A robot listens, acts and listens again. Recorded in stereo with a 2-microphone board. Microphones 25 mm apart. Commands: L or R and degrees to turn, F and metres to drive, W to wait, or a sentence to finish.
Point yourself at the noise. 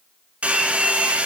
R70
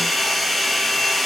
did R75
Found it: a hair dryer, straight ahead, 1 to 2 m away.